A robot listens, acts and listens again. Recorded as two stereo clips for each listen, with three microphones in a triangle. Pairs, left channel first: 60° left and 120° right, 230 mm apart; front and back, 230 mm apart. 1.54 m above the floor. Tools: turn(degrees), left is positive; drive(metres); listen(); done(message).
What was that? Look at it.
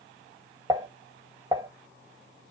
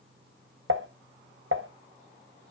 turn(degrees=170)
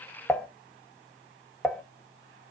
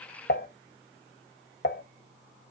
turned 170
turn(degrees=-25)
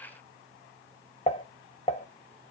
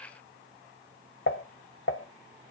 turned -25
done("Facing the dishes clattering, 1 to 2 m away.")